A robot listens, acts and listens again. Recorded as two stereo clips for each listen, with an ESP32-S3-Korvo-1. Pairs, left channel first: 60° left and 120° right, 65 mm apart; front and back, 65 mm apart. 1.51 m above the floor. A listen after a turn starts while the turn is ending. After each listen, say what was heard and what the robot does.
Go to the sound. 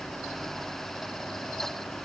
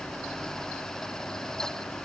Keep listening.
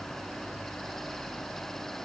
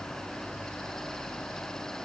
Keep listening.
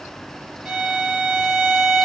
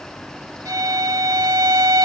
The violin: 160° left. Turn 160° left.
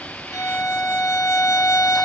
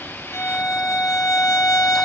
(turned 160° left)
The violin is now 20° left. Turn 20° left.
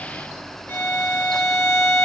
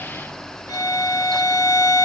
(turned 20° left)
Drive 1.0 m forward.
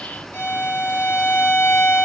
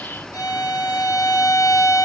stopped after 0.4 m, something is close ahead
Something is in my way. I am facing the violin but have not reached it.